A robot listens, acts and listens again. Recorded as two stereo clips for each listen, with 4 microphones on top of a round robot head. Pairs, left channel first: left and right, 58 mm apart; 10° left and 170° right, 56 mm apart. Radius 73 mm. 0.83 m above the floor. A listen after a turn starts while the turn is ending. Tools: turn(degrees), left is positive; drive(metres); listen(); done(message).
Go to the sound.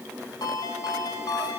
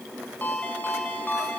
turn(degrees=70)
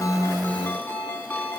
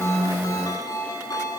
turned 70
turn(degrees=30)
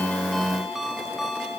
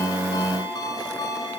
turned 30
drive(metres=1.0)
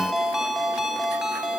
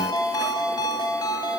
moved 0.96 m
drive(metres=1.0)
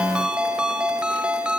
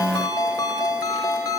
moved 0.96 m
turn(degrees=-15)
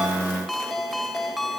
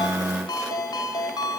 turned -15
drive(metres=1.0)
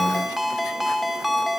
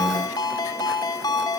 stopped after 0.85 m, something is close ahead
done("I am next to the ringtone.")